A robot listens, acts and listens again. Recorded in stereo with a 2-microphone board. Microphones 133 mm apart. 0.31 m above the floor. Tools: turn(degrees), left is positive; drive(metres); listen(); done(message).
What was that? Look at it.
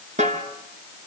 turn(degrees=-65)
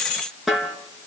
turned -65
done("Found it: a snare drum, straight ahead.")